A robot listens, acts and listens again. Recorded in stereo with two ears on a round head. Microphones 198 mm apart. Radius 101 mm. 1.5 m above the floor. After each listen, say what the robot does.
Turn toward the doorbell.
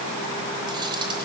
Keep listening.
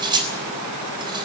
Keep listening.
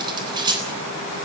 I can't make out a doorbell, only cutlery clinking.